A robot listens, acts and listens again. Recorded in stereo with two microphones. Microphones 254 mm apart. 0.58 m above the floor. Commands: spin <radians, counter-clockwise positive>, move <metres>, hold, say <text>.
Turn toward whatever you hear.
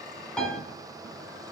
spin 0.52
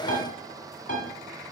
spin 2.62
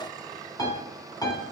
spin 0.26
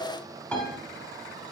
say Found it: a piano, straight ahead, 1 to 2 m away.